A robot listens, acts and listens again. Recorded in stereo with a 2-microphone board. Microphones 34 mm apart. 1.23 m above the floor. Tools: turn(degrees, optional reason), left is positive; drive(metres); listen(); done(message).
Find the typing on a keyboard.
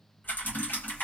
turn(degrees=90)
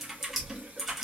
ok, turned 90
turn(degrees=-10, reason="So it is at 10° right.")
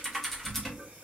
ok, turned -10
done("Found it: typing on a keyboard, straight ahead, 1 to 2 m away.")